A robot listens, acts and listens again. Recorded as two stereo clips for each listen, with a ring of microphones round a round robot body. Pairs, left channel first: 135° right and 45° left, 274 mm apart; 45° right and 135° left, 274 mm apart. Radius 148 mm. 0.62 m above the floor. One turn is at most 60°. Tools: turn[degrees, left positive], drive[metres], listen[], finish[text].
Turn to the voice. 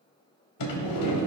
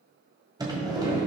Action: listen[]
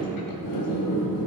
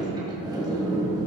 Action: listen[]
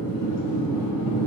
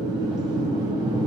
Action: finish[I can't make out anyone speaking to turn to.]